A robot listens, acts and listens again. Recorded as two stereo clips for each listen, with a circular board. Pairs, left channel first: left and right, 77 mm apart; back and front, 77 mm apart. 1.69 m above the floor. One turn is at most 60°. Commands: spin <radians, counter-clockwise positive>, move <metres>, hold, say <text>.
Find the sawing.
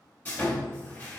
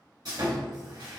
spin 0.44
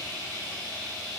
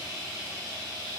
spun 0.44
say Found it: sawing, straight ahead.